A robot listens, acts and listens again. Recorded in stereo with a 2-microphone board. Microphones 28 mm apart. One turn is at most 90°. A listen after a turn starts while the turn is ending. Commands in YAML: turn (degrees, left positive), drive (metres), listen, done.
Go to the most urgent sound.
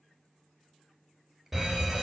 turn: -30
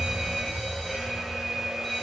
turn: 20
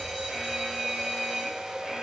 drive: 1.0
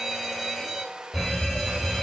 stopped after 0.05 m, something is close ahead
done: "Something is in my way. I am facing the fire alarm but have not reached it."